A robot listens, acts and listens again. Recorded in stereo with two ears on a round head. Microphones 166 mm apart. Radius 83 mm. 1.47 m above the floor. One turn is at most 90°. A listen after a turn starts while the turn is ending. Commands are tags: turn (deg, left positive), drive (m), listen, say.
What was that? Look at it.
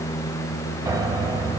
<turn deg="-20"/>
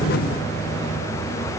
<listen/>
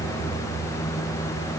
<listen/>
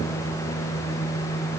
<say>I heard a piano, but can't make it out now. It was about straight ahead or 140° right.</say>